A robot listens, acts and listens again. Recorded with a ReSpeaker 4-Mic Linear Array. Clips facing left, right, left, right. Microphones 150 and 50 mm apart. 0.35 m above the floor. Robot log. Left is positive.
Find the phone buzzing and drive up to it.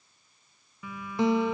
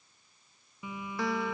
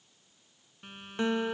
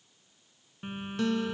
note: The phone buzzing: about 20° right or 160° right.
cmd yaw -20
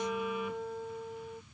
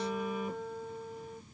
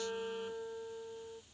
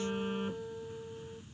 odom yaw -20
note: So it is at 140° right.
cmd yaw -140
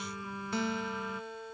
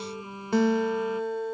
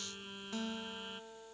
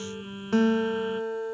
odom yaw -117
note: The phone buzzing is now 20° right.
cmd yaw -20
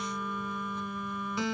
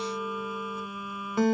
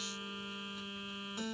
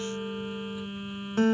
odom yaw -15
note: The phone buzzing is now 10° right.
cmd yaw -10
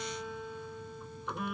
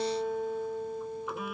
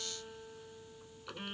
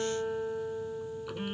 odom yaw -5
cmd fwd 1.0
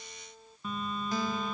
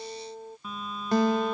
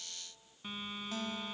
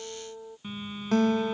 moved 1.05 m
cmd fwd 1.0
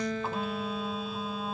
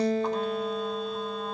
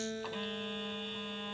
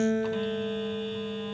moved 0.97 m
cmd fwd 1.0
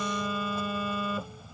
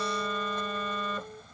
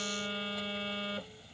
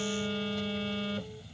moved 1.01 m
note: The phone buzzing is now 10° left.
cmd yaw +10
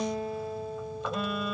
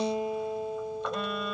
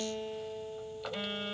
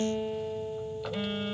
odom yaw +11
cmd fwd 1.0
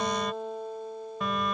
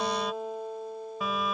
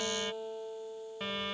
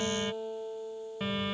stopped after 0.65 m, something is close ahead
end: I am next to the phone buzzing.